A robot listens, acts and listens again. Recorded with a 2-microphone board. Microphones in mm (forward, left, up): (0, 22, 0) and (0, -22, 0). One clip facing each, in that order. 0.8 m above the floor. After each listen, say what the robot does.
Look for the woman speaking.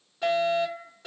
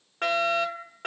Keep listening.
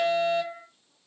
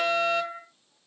Keep listening.
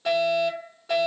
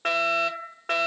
I can't make out a woman speaking, only a fire alarm.